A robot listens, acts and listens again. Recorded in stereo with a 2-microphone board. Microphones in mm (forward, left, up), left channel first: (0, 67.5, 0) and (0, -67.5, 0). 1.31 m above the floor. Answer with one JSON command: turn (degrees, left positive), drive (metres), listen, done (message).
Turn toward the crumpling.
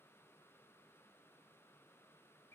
{"listen": true}
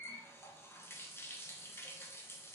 {"listen": true}
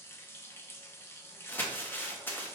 {"turn": 30}
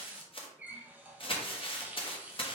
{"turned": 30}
{"turn": 130}
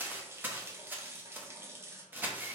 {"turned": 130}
{"turn": -15}
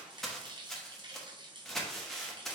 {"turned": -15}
{"done": "Found it: crumpling, straight ahead, under 1 m away."}